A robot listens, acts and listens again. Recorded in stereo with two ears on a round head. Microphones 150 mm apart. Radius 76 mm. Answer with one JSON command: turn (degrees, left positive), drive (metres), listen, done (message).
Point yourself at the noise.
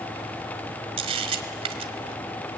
{"turn": -35}
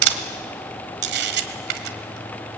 {"turn": -105}
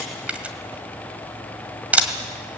{"turn": -10}
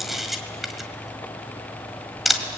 {"done": "Found it: a camera shutter, straight ahead, 1 to 2 m away."}